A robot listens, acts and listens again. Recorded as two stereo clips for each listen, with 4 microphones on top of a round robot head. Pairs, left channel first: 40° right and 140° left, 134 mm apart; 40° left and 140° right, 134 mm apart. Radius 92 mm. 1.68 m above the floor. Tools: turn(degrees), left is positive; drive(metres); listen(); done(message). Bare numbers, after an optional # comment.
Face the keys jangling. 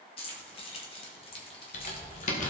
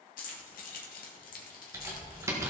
# The keys jangling: 10° left.
turn(10)
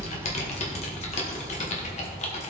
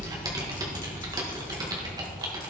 listen()
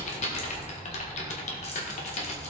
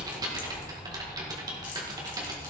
listen()
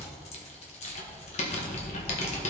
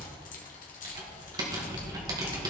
done("Facing where the keys jangling came from. I can't hear it now.")